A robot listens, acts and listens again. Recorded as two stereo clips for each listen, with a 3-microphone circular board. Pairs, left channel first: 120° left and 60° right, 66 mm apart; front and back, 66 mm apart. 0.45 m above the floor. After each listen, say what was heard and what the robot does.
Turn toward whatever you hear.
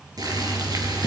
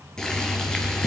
The boiling: 80° right. Turn 80° right.
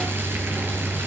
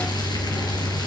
Found it: boiling, straight ahead.